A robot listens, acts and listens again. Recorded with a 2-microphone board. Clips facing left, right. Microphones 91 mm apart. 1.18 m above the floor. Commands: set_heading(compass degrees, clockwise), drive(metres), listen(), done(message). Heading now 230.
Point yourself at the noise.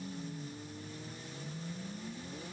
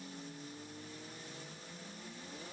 listen()
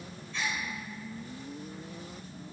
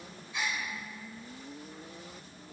set_heading(260)
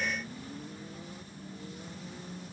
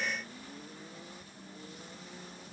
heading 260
listen()
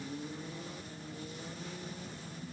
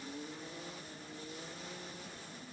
done("I heard a gasp, but can't make it out now. It was about 20° left or 140° right.")